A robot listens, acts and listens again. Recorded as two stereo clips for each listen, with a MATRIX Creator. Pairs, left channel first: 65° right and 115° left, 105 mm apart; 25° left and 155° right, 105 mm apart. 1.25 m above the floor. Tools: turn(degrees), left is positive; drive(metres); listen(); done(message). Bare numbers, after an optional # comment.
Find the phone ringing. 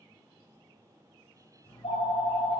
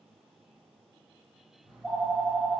# The phone ringing: 65° right.
turn(-65)
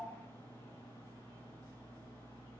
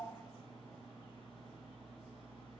done("Found it: a phone ringing, straight ahead, 1 to 2 m away.")